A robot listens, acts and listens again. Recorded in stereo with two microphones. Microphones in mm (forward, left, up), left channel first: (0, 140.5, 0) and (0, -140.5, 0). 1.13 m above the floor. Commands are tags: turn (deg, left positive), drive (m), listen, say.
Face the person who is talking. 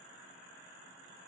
<listen/>
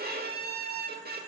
<listen/>
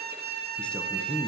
<turn deg="30"/>
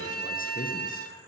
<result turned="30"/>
<listen/>
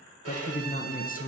<turn deg="145"/>
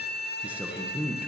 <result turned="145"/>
<say>Found it: a man speaking, straight ahead.</say>